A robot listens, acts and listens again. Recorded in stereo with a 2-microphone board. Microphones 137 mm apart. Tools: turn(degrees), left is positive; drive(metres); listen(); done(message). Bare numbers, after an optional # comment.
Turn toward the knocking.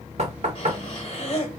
# The knocking: about 55° right or 125° right.
turn(-55)
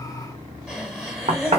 # So it is at 55° right.
turn(-55)
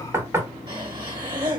# The knocking is now 20° right.
turn(-20)
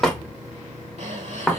done("Facing the knocking.")